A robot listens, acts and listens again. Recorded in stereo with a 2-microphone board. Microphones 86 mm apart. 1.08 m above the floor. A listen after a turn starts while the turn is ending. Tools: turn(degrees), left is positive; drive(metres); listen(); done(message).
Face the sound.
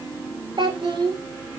turn(degrees=-60)
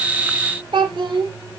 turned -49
turn(degrees=-65)
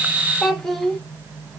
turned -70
done("Found it: a child speaking, straight ahead, 1 to 2 m away.")